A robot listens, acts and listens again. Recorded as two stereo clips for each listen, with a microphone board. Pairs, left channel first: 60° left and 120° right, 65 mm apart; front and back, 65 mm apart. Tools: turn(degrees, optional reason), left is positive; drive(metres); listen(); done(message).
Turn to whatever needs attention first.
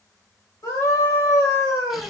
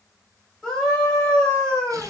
turn(degrees=75, reason="The scream: 75° left.")
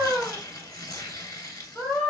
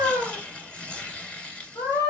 done("Facing the scream, 1 to 2 m away.")